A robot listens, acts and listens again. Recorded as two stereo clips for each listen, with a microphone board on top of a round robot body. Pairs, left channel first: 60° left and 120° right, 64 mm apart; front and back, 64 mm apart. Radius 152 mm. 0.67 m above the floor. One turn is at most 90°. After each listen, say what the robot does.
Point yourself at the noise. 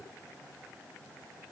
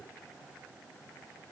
Keep listening.
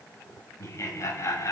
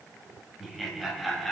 Turn 85° left.
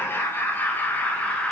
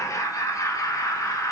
Found it: laughter, straight ahead, 1 to 2 m away.